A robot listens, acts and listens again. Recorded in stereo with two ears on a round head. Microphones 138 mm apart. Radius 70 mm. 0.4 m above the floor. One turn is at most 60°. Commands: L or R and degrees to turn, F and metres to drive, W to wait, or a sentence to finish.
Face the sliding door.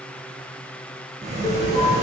R45
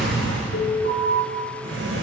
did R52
R60
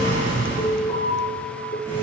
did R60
R25
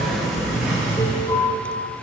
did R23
Facing the sliding door, over 4 m away.